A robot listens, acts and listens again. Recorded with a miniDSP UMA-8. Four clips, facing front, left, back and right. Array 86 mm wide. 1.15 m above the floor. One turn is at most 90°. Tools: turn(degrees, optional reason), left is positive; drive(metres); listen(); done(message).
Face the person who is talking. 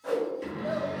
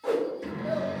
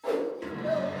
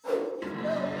turn(degrees=-90, reason="The child speaking: 140° right.")
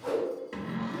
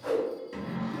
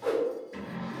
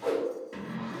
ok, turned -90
turn(degrees=-50, reason="Nothing new. It was at 50° right.")
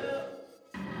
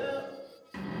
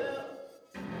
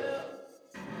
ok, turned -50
done("Facing the child speaking, 1 to 2 m away.")